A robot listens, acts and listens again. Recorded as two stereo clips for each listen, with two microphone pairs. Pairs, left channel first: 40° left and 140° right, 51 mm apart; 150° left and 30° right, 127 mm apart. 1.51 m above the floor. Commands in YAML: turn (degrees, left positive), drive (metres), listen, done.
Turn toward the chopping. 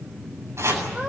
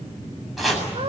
turn: -120
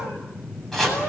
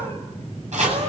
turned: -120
turn: -45
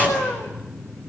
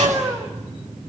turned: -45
listen: true
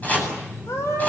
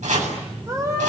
turn: -20
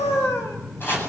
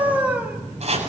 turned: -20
done: "Facing the chopping."